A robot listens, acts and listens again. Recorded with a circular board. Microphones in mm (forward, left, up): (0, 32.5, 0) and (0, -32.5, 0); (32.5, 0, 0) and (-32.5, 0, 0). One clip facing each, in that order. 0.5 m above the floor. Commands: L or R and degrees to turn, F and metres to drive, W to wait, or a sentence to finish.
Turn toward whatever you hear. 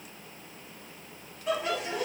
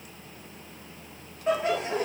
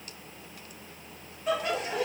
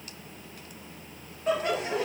R130
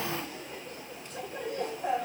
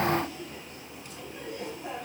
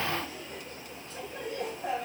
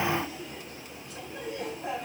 L55
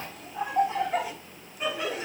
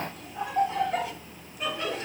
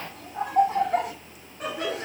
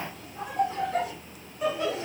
Facing the laughter, 2 to 4 m away.